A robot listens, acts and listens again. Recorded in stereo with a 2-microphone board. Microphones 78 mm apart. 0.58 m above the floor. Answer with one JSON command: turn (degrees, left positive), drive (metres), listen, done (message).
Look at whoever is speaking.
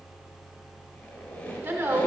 {"turn": -25}
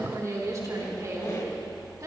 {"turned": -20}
{"turn": -135}
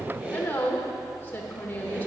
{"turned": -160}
{"turn": 25}
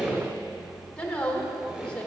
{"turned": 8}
{"turn": 20}
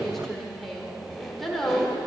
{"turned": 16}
{"done": "Facing the woman speaking."}